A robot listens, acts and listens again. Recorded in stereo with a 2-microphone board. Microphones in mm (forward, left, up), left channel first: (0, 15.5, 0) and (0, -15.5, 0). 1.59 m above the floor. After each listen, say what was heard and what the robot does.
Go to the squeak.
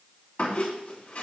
The squeak: about 45° left or 135° left. Turn 45° left.
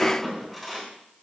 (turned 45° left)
Drive 1.0 m forward.
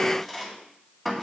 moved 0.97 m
Drive 1.0 m forward.
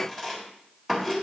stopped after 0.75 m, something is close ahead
Arrived at the squeak, straight ahead.